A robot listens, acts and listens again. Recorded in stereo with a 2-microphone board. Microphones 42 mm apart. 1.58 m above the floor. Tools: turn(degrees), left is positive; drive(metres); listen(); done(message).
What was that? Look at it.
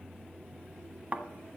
turn(degrees=-35)
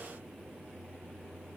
listen()
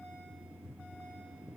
done("I heard a thud, but can't make it out now. It was about straight ahead or 110° right.")